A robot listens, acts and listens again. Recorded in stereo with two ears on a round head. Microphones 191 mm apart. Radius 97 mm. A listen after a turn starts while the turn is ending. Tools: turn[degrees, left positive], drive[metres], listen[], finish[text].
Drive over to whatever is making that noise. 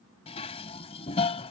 Thought: The dishes clattering: about 30° left or 150° left.
Action: turn[30]
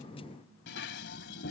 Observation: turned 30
Thought: So it is at 115° left.
Action: turn[115]
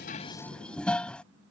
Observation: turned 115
Action: drive[1.0]
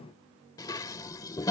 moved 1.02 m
Thought: The dishes clattering is now 20° left.
Action: turn[20]
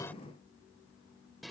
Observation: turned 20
Action: drive[1.0]
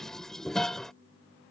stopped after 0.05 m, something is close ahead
Action: finish[I am next to the dishes clattering.]